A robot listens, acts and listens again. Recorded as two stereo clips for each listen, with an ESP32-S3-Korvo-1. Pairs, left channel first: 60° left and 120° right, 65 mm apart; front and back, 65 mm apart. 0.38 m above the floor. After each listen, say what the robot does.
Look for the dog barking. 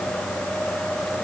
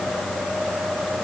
Keep listening.
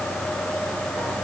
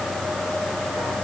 Keep listening.
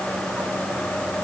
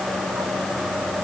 I can't make out a dog barking to turn to.